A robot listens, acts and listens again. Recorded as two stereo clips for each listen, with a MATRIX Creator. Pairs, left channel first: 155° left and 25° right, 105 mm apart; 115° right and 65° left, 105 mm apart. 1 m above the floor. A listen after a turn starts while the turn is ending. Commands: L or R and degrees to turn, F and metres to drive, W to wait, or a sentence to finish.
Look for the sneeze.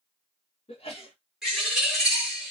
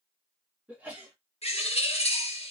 L145
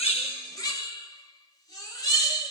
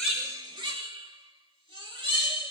I heard a sneeze from this way, but can't make it out now.